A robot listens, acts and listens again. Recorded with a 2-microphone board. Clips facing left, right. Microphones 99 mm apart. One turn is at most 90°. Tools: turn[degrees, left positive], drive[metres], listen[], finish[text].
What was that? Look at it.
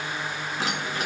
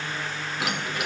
Thought: The keys jangling: about 40° left or 140° left.
Action: turn[40]
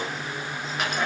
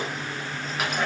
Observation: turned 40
Action: finish[Facing the keys jangling.]